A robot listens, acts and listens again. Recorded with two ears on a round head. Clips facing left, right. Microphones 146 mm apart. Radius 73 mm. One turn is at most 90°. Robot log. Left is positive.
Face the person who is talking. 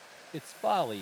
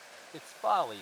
note: The man speaking: about 25° left or 155° left.
cmd yaw +25
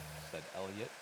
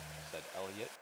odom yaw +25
end: Facing the man speaking.